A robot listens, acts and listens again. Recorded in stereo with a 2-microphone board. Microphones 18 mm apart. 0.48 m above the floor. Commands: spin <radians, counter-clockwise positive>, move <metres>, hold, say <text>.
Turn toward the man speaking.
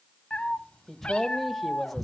spin 0.52
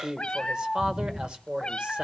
spin -1.05
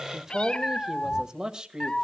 spin -0.79
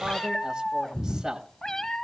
spin -0.44
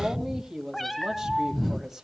spin -0.17
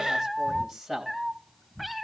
say Found it: a man speaking, straight ahead.